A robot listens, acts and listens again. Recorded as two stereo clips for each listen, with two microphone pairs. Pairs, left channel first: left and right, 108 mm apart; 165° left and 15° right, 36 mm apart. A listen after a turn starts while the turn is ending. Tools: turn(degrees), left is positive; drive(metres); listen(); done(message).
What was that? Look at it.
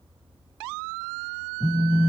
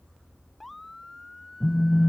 turn(degrees=55)
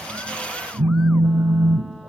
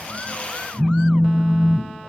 turn(degrees=-25)
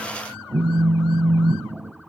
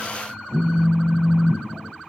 done("Facing the phone buzzing, 1 to 2 m away.")